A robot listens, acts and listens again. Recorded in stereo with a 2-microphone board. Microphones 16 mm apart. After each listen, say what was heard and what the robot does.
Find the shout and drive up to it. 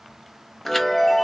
Keep listening.
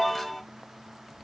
Keep listening.
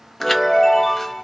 I can't make out a shout, only a chime.